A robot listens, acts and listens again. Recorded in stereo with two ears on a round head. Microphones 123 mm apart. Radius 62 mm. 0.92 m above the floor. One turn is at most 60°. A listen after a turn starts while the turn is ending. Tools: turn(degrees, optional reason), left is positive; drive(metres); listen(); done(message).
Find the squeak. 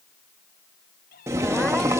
turn(degrees=60, reason="The squeak: about 70° left or 110° left.")
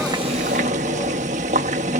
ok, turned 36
listen()
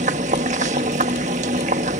listen()
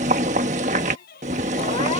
turn(degrees=60, reason="So it is at 70° left.")
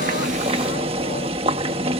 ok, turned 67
listen()
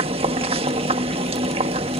listen()
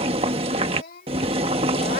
done("Facing where the squeak came from. I can't hear it now.")